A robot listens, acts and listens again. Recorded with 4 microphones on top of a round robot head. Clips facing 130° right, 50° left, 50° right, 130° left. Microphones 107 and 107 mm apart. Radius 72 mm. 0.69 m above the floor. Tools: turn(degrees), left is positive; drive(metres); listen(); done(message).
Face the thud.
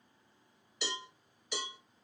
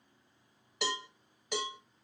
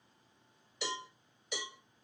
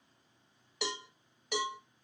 listen()
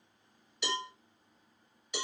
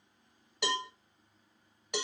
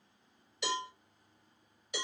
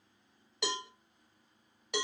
listen()
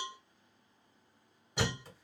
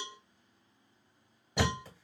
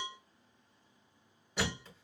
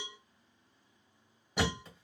turn(degrees=50)
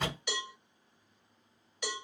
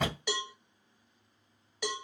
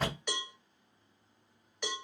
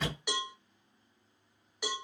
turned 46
turn(degrees=10)
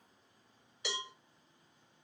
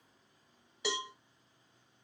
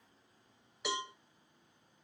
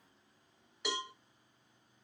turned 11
done("Facing where the thud came from. I can't hear it now.")